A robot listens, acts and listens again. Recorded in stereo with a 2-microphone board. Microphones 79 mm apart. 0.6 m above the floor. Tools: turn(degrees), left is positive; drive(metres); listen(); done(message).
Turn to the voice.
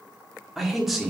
turn(degrees=-30)
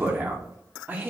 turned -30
turn(degrees=-150)
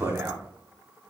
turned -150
turn(degrees=-35)
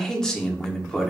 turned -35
turn(degrees=10)
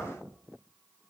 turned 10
listen()
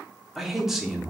done("Facing the man speaking, 1 to 2 m away.")